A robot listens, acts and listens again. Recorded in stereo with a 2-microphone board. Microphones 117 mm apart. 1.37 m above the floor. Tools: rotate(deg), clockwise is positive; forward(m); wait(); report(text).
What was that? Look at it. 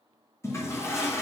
rotate(-20)
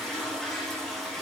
report("Found it: a toilet flushing, straight ahead.")